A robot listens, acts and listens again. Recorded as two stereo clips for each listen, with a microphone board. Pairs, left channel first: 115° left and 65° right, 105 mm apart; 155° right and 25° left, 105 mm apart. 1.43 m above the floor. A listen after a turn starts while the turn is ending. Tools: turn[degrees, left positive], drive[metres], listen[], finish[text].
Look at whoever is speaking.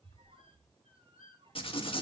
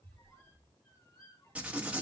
Action: listen[]
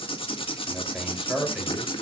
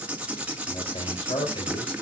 Thought: The man speaking: 150° right.
Action: turn[-150]
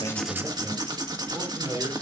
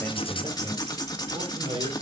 Action: finish[Facing the man speaking.]